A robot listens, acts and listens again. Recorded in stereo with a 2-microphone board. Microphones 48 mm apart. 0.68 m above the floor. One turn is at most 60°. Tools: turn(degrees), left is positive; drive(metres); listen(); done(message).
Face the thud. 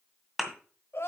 turn(degrees=30)
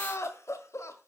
listen()
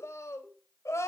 done("I heard a thud, but can't make it out now. It was about 30° right or 150° left.")